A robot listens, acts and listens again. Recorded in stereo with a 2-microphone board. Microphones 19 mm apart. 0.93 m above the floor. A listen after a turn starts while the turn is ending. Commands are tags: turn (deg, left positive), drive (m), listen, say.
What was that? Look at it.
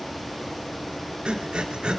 <turn deg="-60"/>
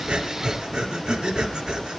<turn deg="-55"/>
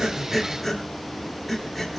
<say>Found it: breathing, straight ahead, 2 to 4 m away.</say>